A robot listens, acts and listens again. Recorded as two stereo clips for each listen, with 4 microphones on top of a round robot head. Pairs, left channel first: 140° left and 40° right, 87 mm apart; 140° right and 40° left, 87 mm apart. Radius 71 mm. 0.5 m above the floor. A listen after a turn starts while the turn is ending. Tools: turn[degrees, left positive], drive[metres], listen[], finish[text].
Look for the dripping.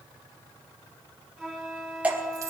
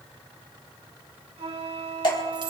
Thought: The dripping: 110° right.
Action: turn[-110]
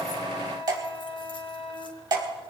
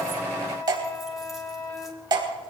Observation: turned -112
Action: finish[Found it: dripping, straight ahead, 2 to 4 m away.]